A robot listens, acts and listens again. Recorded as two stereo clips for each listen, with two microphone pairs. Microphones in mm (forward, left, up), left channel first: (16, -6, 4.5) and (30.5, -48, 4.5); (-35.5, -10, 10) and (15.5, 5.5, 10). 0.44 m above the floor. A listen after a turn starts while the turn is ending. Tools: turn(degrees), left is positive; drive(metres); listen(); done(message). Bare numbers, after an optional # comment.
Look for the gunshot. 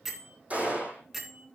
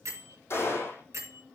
# The gunshot: 130° right.
turn(-130)
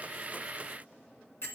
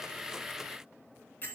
done("Facing where the gunshot came from. I can't hear it now.")